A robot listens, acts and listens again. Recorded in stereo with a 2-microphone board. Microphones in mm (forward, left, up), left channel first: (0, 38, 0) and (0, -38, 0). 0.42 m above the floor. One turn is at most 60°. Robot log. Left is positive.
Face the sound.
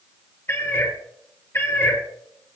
note: The cat meowing: about 30° left or 150° left.
cmd yaw +30
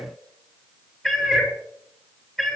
end: Facing the cat meowing.